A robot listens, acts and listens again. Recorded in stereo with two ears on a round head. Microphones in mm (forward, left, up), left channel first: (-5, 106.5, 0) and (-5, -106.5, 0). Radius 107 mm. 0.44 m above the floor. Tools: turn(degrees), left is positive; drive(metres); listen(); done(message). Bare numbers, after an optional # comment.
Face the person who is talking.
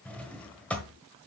listen()
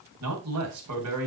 # The man speaking: about 70° right or 110° right.
turn(-70)
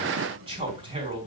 # So it is at 20° right.
turn(-20)
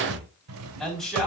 done("Facing the man speaking, 2 to 4 m away.")